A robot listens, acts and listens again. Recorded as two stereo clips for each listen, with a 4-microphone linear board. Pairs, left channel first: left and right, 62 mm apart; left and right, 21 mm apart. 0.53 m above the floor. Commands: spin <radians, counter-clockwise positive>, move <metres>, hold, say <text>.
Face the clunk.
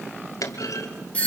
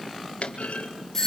spin 1.05
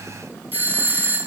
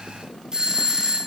hold
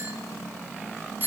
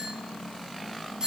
say I heard a clunk, but can't make it out now. It was about straight ahead or 60° left.